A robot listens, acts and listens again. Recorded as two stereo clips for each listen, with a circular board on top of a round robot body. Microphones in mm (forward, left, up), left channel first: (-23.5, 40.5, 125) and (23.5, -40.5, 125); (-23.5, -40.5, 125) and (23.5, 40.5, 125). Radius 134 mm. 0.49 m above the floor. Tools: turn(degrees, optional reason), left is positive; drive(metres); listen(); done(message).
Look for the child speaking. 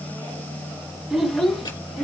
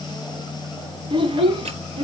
turn(degrees=35, reason="The child speaking: 35° left.")
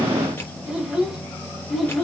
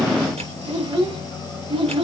turn(degrees=30, reason="The child speaking is now 30° left.")
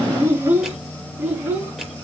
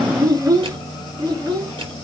turn(degrees=10, reason="The child speaking is now 10° left.")
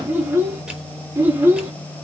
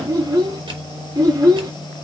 turn(degrees=10, reason="The child speaking is now 10° left.")
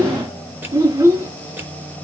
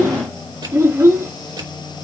done("Facing the child speaking, over 4 m away.")